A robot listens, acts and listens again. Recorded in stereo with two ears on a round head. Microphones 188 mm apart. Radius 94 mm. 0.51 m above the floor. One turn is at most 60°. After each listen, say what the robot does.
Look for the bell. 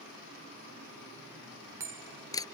Turn 30° right.
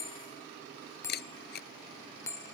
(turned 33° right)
Turn 15° left.
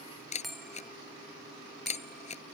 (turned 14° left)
Found it: a bell, straight ahead.